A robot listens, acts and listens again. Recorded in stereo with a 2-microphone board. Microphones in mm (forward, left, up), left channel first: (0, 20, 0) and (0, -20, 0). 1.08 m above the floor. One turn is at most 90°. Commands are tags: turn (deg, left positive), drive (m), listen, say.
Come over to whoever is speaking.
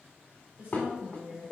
<turn deg="-45"/>
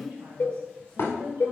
<turn deg="-90"/>
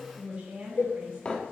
<turn deg="-30"/>
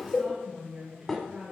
<turn deg="-10"/>
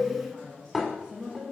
<drive m="1.0"/>
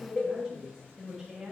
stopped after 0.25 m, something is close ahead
<say>Something is in my way. I am facing the woman speaking but have not reached it.</say>